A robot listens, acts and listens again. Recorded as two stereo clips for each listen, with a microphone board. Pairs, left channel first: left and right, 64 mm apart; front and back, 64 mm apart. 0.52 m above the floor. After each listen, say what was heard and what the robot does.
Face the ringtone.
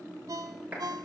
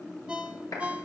The ringtone: 105° right. Turn 105° right.
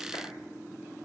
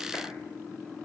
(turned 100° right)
Keep listening.
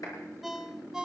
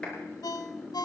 Found it: a ringtone, straight ahead, under 1 m away.